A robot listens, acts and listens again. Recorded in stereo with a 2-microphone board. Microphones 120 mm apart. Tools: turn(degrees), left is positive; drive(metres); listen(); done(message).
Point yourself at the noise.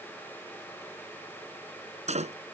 turn(degrees=-70)
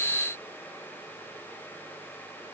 listen()
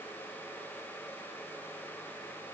done("I heard a door slam, but can't make it out now. It was about straight ahead or 40° right.")